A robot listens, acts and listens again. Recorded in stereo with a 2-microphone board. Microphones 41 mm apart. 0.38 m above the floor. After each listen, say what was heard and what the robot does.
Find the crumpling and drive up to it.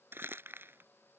The crumpling: about 60° right or 120° right. Turn 60° right.
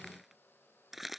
Drive 1.0 m forward.
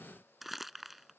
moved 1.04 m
Drive 1.0 m forward.
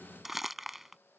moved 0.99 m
Drive 1.0 m forward.
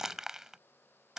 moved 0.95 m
The crumpling is now 15° right. Turn 15° right.
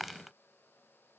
Drive 1.0 m forward.
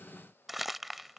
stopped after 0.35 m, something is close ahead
I am next to the crumpling.